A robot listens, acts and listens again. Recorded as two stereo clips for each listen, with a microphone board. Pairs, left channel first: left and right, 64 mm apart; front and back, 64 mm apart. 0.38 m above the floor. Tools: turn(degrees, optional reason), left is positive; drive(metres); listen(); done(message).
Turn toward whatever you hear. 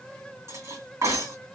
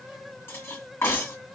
turn(degrees=-50, reason="The cutlery clinking: 50° right.")
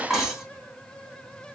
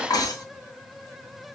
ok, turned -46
done("Found it: cutlery clinking, straight ahead, 2 to 4 m away.")